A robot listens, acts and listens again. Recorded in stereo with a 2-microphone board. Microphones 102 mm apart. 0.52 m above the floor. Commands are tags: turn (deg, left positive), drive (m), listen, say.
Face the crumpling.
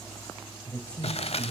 <turn deg="90"/>
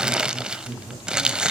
<turn deg="-10"/>
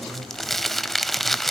<say>Facing the crumpling, under 1 m away.</say>